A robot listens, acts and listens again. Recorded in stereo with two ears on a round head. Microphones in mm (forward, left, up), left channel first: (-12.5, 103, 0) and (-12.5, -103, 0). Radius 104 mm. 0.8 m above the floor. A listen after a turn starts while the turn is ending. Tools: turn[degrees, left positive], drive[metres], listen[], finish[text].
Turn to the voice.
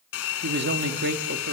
Thought: The man speaking: about 45° right or 135° right.
Action: turn[-45]
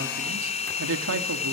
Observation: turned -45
Thought: So it is at 80° right.
Action: turn[-80]
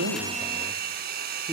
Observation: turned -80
Action: listen[]
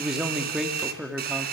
Action: finish[Facing the man speaking, 2 to 4 m away.]